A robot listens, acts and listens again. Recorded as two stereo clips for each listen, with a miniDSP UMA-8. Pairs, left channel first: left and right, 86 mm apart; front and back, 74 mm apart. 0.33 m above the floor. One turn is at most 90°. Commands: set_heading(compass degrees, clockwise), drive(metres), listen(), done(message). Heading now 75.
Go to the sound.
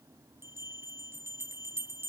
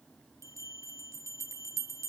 set_heading(165)
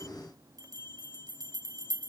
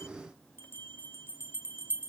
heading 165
set_heading(215)
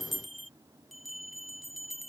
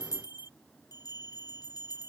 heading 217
drive(1.0)
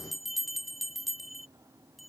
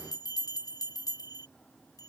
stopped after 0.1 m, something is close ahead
done("Something is in my way. I am facing the bell but have not reached it.")